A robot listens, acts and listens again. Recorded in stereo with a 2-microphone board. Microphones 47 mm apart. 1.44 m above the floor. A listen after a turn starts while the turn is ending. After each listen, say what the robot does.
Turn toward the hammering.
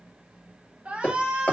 Turn 30° left.
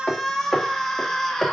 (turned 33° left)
Found it: hammering, straight ahead.